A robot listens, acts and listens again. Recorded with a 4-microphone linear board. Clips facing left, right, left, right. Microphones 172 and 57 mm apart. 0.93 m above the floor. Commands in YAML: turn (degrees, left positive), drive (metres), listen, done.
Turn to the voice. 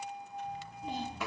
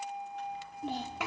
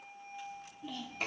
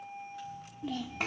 turn: -75
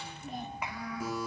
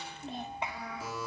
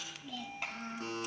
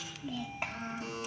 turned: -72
turn: -25
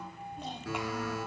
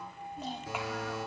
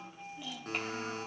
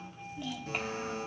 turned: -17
done: "Facing the child speaking."